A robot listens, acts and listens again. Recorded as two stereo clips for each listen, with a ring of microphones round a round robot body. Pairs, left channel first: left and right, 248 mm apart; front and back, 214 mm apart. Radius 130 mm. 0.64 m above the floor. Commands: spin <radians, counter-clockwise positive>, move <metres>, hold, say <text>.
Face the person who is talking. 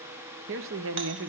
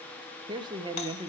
spin -1.92
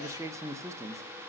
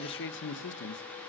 spin -0.26
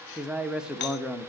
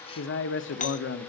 say Facing the man speaking.